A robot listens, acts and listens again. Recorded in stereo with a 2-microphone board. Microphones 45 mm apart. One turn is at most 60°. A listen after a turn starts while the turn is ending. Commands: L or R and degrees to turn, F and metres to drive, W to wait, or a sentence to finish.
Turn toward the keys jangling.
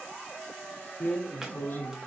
W
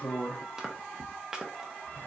W
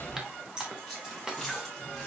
R30
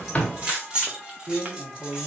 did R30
R60
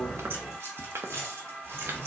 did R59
R60
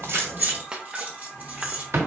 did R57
R35
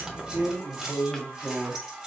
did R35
Facing the keys jangling.